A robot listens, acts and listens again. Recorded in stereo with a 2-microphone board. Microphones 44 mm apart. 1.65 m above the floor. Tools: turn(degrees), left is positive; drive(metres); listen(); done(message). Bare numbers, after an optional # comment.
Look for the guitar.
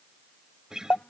turn(-30)
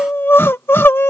listen()
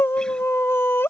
listen()
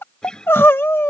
# So it is at 15° left.
turn(15)
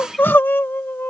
listen()
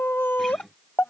listen()
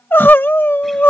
done("Facing where the guitar came from. I can't hear it now.")